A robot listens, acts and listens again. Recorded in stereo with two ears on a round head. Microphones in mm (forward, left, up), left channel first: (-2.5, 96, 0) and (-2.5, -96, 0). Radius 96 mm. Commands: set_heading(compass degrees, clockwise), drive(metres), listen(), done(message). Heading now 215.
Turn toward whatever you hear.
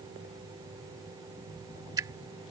set_heading(230)
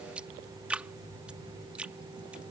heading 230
done("Found it: dripping, straight ahead.")